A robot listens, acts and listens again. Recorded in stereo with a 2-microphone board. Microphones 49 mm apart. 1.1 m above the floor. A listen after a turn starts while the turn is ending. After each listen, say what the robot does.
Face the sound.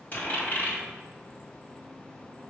Turn 40° left.
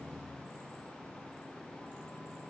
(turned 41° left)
Keep listening.
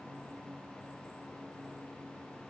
I heard a dropped coin, but can't make it out now. It was about straight ahead or 100° left.